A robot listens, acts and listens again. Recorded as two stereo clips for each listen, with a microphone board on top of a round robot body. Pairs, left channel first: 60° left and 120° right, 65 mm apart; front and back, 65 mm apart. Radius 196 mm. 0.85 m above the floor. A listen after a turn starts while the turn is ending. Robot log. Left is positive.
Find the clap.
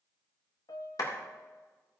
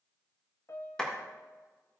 note: The clap: 75° left.
cmd yaw +75
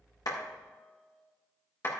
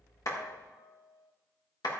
end: Found it: a clap, straight ahead, 1 to 2 m away.